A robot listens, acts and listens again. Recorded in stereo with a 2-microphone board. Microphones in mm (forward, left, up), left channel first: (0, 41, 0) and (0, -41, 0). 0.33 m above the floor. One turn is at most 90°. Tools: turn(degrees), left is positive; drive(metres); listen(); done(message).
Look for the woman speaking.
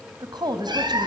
turn(degrees=-60)
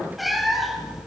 listen()
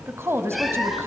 turn(degrees=-35)
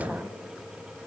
turn(degrees=-15)
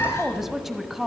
done("Found it: a woman speaking, straight ahead.")